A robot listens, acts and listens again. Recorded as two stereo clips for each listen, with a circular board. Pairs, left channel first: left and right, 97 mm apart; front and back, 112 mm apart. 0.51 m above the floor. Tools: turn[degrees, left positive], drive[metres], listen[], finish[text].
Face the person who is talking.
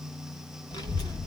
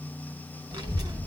Thought: The child speaking: 130° left.
Action: turn[130]
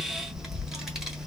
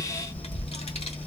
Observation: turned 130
Action: finish[Facing the child speaking.]